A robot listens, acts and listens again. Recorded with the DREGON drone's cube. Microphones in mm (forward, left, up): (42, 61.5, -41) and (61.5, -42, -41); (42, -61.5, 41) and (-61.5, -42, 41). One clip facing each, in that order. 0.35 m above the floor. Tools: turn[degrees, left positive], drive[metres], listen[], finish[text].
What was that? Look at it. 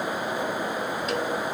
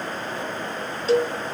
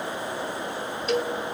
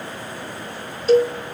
Thought: The cowbell: 135° right.
Action: turn[-135]
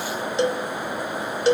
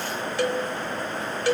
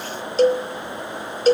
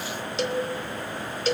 Thought: The cowbell is now 35° left.
Action: turn[35]
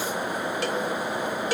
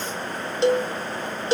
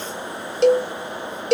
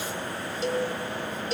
Thought: The cowbell is now 15° right.
Action: turn[-15]
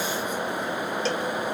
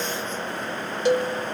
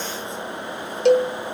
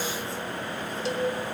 Action: finish[Facing the cowbell.]